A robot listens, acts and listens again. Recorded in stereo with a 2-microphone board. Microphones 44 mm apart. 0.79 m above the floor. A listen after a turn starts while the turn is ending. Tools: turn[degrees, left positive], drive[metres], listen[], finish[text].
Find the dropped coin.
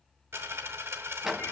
Action: turn[-90]
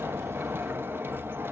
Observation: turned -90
Action: finish[Facing where the dropped coin came from. I can't hear it now.]